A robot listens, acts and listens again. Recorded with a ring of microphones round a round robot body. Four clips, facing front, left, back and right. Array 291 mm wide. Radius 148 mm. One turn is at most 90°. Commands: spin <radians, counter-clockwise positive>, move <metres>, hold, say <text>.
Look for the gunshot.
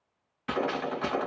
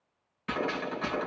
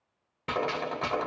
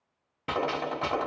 spin -1.57
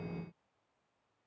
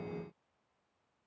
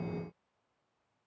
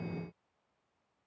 spin -0.70
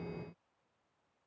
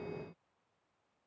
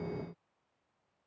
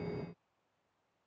say Facing where the gunshot came from. I can't hear it now.